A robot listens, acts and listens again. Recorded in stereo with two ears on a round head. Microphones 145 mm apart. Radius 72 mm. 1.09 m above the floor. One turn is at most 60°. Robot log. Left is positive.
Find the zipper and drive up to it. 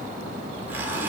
cmd yaw -30
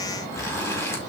note: So it is at 20° left.
cmd yaw +20
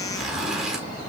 cmd fwd 1.0
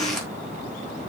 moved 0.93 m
cmd fwd 1.0
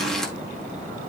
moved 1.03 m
cmd fwd 1.0
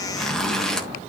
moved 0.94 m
cmd fwd 1.0
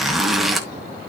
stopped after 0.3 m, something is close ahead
end: I am next to the zipper.